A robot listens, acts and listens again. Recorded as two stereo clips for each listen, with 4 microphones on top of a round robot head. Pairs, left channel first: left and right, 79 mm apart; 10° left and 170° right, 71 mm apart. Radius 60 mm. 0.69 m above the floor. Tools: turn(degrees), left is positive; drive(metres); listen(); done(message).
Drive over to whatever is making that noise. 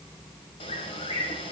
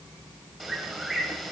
turn(degrees=100)
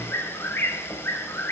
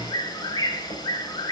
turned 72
turn(degrees=30)
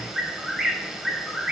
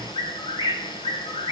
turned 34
drive(metres=1.0)
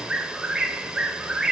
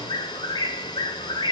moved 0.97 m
turn(degrees=-10)
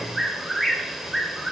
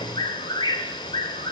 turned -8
drive(metres=1.0)
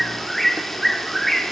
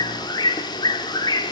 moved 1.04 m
drive(metres=1.0)
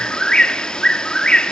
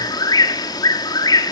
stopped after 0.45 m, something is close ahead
turn(degrees=10)
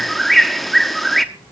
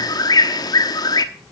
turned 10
done("I am next to the bird.")